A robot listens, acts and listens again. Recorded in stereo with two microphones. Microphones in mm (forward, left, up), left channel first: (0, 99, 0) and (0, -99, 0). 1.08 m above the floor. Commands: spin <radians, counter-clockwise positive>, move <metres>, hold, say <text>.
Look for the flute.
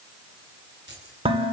hold
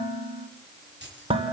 hold
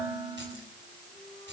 say I can't make out a flute, only dishes clattering and keys jangling.